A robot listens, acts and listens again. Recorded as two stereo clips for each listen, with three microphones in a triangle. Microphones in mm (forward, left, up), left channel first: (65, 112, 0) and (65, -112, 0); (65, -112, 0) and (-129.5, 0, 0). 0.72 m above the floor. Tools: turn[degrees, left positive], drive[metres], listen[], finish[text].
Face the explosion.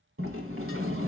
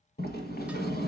Action: listen[]
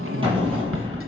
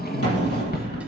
Thought: The explosion: 20° right.
Action: turn[-20]
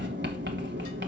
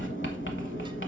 Action: finish[I heard an explosion from this way, but can't make it out now.]